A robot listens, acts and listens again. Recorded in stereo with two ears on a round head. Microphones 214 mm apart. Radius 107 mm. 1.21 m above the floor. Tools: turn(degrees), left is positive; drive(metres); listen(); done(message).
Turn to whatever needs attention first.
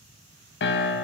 listen()
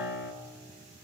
listen()
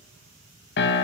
done("I can't make out anything urgent, only a piano.")